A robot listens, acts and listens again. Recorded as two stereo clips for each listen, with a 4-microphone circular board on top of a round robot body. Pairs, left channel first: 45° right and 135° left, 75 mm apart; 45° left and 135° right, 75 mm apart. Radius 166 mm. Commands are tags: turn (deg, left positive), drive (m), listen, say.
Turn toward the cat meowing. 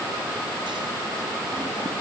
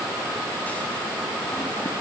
<listen/>
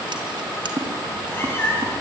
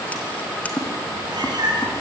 <turn deg="-110"/>
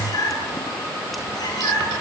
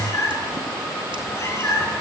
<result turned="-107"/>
<turn deg="-10"/>
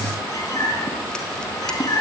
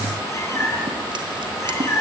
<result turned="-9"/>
<say>Facing the cat meowing.</say>